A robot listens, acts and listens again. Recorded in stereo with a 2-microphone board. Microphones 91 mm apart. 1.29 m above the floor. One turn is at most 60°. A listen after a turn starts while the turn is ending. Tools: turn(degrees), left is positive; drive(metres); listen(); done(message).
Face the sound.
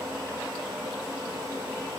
listen()
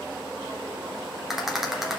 turn(degrees=-30)
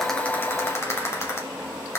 turn(degrees=30)
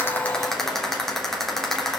done("Facing the rattle.")